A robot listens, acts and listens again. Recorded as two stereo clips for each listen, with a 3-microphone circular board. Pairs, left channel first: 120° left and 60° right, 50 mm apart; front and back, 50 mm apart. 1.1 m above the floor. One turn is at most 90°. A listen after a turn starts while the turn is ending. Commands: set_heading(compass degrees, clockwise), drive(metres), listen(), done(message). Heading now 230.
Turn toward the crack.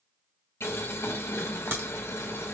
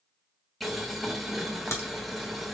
set_heading(250)
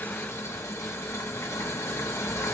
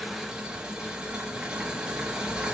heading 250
done("Facing where the crack came from. I can't hear it now.")